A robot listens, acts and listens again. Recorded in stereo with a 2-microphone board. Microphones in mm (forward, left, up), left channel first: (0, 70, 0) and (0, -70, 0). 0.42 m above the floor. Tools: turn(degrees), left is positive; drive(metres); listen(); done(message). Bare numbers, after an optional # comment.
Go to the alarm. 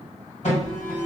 # The alarm: about 55° left or 125° left.
turn(55)
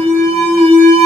# So it is at 20° left.
turn(20)
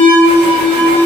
drive(1.0)
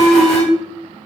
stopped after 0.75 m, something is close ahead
done("I am next to the alarm.")